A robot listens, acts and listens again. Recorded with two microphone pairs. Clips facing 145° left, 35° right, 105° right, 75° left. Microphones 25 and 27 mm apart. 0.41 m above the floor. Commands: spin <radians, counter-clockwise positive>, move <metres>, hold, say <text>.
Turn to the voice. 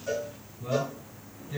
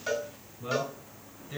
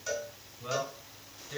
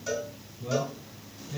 spin -1.48
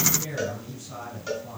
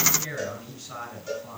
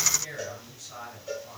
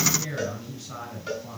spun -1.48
spin 0.44
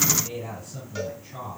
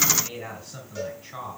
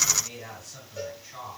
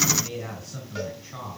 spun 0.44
spin 0.35
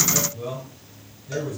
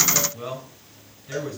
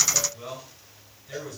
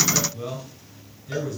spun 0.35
say Facing the man speaking.